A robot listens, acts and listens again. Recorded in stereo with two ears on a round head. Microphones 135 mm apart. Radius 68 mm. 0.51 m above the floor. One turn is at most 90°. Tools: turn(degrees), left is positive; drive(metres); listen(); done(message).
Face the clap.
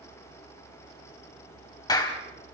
turn(degrees=25)
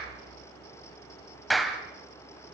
done("Facing the clap.")